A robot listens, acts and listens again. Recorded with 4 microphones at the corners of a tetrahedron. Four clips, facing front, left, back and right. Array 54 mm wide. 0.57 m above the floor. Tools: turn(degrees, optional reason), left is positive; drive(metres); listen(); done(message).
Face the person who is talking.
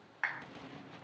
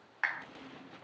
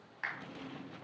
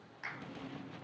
listen()
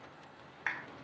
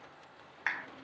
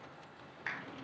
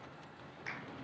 listen()
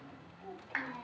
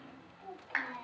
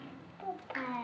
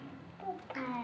turn(degrees=-145, reason="The child speaking: 145° right.")
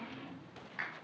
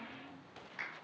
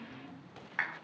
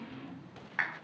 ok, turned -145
listen()
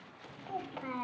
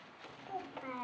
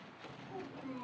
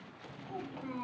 turn(degrees=20, reason="The child speaking is now 20° left.")
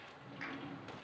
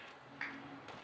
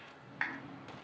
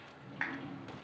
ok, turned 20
listen()
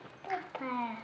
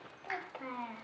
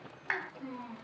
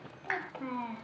done("Facing the child speaking.")